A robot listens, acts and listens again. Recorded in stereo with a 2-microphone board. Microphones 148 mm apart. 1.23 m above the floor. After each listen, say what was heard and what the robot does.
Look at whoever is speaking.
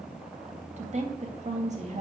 The woman speaking: about 45° right or 135° right. Turn 45° right.
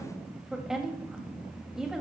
Facing the woman speaking.